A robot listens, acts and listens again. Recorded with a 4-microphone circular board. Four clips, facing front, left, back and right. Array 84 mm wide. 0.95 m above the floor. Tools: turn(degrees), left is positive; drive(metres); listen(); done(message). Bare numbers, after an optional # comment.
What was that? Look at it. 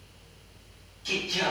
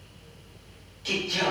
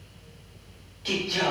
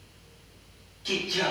# The singing: 165° left.
turn(165)
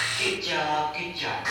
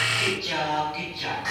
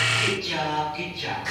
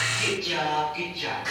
# The singing is now 35° left.
turn(35)
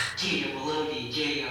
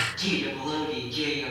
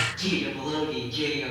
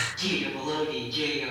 done("Facing the singing.")